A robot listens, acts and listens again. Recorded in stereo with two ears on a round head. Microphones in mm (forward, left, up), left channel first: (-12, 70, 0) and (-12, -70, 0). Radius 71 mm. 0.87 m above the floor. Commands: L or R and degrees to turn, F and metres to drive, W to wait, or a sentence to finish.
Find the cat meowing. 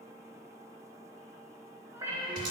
R20
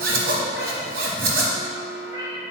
R25
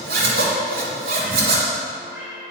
R30
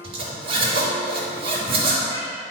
W
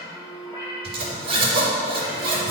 L25
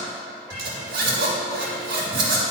W
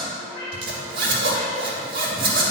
R20
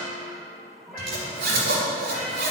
W
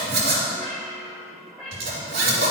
Facing the cat meowing.